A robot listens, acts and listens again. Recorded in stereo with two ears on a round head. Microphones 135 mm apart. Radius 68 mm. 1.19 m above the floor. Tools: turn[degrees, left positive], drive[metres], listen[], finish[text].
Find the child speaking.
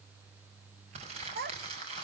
Thought: The child speaking: about 70° right or 110° right.
Action: turn[-70]
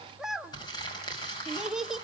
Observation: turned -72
Action: finish[Facing the child speaking.]